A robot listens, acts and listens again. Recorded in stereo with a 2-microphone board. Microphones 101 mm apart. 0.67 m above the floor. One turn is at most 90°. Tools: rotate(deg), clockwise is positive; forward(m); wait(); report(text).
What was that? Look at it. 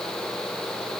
wait()
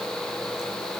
wait()
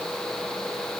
report("I can't make out anything to turn to.")